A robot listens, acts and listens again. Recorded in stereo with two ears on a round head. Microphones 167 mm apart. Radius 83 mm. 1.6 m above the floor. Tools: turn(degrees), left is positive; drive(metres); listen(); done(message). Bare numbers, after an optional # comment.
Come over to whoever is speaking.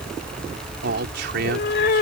# The man speaking: about 60° right or 120° right.
turn(-60)
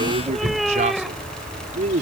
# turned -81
# So it is at 40° right.
turn(-40)
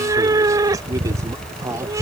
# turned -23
# The man speaking is now 20° right.
turn(-20)
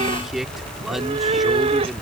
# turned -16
drive(1.0)
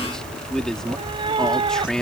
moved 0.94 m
drive(1.0)
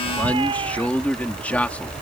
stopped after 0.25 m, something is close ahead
# The man speaking is now 10° left.
turn(10)
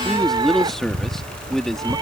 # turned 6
done("Blocked. The man speaking is further on, straight ahead.")